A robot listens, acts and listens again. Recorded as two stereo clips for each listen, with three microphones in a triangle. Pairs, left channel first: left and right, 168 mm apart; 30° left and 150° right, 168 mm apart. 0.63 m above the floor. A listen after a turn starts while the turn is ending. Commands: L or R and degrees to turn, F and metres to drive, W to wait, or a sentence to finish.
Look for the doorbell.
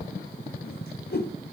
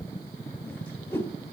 W
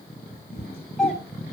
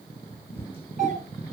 L175
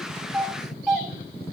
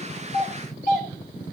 Facing the doorbell, 2 to 4 m away.